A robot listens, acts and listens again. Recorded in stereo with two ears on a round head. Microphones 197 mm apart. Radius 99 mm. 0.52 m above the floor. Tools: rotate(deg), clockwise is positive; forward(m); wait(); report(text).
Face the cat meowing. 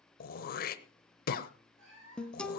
rotate(60)
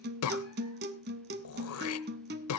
wait()
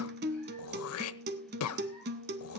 wait()
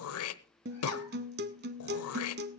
report("I heard a cat meowing, but can't make it out now. It was about straight ahead or 60° right.")